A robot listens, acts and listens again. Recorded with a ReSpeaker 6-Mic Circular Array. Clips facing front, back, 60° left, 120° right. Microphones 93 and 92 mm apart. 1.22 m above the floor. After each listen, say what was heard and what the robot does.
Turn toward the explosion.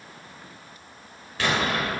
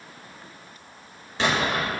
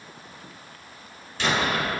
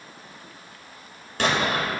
The explosion: 120° right. Turn 120° right.
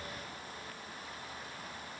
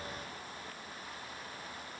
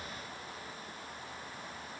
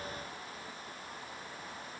I heard an explosion from this way, but can't make it out now.